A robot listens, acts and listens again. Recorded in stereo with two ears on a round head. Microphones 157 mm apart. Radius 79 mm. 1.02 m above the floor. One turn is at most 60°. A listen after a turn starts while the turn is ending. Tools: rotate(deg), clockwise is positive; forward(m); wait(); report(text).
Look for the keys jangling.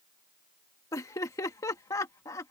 wait()
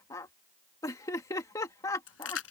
rotate(-60)
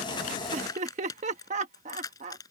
rotate(-20)
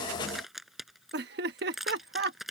report("Facing the keys jangling.")